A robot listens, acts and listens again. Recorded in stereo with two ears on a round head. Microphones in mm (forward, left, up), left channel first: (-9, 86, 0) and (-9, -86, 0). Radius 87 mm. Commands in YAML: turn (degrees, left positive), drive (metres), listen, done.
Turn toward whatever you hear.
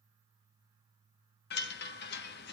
turn: 55
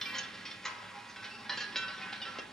done: "Found it: a chime, straight ahead."